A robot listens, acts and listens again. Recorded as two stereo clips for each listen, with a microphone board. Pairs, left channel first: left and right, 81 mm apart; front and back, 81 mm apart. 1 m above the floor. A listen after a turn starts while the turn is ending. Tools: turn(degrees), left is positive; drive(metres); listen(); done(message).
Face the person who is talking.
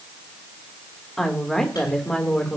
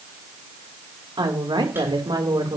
turn(degrees=170)
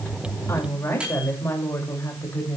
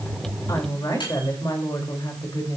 turn(degrees=35)
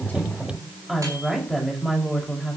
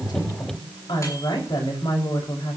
done("Facing the woman speaking.")